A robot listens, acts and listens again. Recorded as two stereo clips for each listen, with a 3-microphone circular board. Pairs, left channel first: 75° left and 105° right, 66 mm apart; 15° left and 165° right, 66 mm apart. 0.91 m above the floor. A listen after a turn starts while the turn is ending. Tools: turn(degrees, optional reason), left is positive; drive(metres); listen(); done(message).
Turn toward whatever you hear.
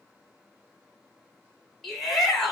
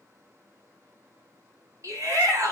turn(degrees=160, reason="The shout: 160° left.")
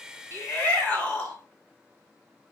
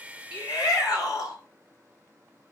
done("Facing the shout.")